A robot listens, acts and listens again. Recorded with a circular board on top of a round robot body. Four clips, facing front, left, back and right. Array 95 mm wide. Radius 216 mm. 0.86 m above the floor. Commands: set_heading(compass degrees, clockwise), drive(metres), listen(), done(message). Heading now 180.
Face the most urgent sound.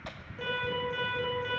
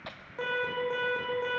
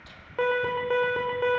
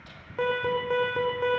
set_heading(335)
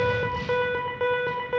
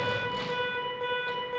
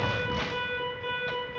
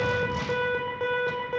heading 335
set_heading(350)
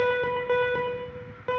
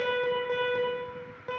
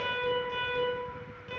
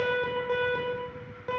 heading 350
done("Found it: an alarm, straight ahead.")